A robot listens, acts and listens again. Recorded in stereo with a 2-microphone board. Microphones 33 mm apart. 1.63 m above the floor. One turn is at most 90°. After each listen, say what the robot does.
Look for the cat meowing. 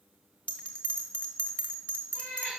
Turn 55° left.
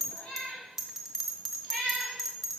Turn 40° left.
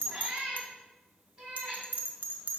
Turn 20° right.
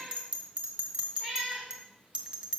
Facing the cat meowing.